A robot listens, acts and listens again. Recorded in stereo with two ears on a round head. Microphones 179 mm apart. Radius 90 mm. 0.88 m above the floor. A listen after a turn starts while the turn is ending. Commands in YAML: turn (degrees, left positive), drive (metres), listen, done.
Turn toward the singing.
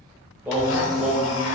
turn: -30
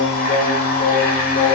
turn: 45
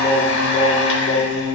turn: 45
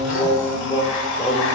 turn: 30
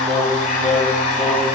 done: "Facing the singing."